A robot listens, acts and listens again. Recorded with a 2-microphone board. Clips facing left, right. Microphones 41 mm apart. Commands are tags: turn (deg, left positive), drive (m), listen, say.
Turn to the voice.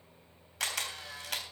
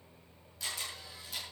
<listen/>
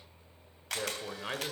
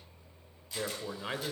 <turn deg="30"/>
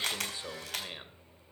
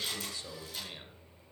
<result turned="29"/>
<turn deg="150"/>
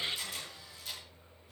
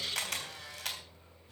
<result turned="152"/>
<say>Facing the man speaking.</say>